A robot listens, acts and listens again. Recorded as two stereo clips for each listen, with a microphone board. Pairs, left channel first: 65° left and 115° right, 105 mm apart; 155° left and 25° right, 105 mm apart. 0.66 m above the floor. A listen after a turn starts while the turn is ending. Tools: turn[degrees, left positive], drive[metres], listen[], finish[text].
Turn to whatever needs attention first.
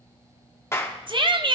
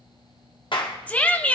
Thought: The shout: 130° right.
Action: turn[-130]
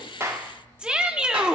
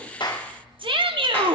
Thought: The shout is now 35° right.
Action: turn[-35]
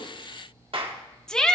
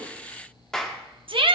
Thought: The shout is now 15° right.
Action: turn[-15]
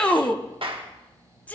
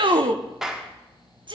Action: finish[Found it: a shout, straight ahead, under 1 m away.]